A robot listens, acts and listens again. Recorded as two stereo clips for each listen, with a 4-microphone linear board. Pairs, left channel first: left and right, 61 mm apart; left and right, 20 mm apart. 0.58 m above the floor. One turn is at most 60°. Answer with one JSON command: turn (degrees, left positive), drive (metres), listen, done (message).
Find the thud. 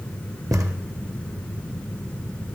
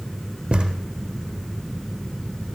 {"turn": -60}
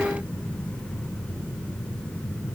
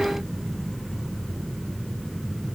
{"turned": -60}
{"turn": -30}
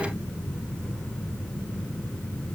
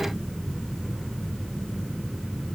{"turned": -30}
{"done": "Facing where the thud came from. I can't hear it now."}